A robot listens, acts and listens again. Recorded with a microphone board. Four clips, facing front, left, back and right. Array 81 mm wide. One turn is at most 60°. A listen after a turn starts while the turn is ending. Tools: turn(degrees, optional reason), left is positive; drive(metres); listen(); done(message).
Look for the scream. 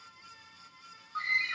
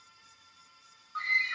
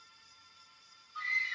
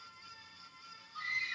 turn(degrees=45, reason="The scream: 45° left.")
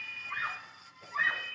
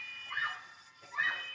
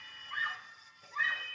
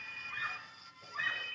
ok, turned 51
done("Found it: a scream, straight ahead.")